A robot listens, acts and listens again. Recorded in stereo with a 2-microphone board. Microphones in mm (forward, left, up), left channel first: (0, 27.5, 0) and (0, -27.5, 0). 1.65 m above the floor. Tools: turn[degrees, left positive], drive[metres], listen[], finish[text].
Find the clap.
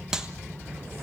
Action: turn[-30]
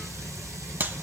Thought: So it is at 135° right.
Action: turn[-135]
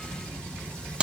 Thought: The clap is now 20° right.
Action: turn[-20]
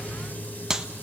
Thought: The clap is now 10° right.
Action: turn[-10]
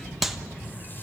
Action: finish[Found it: a clap, straight ahead, 1 to 2 m away.]